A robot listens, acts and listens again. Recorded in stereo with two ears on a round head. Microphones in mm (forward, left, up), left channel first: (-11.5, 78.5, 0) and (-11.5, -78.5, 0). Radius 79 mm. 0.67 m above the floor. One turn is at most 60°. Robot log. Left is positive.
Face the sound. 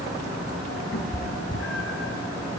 cmd yaw +60
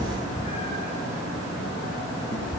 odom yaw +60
note: So it is at 25° left.
cmd yaw +25
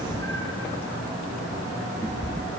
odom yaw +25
note: The cat meowing is now 15° left.
cmd yaw +15
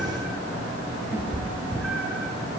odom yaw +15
end: Facing the cat meowing.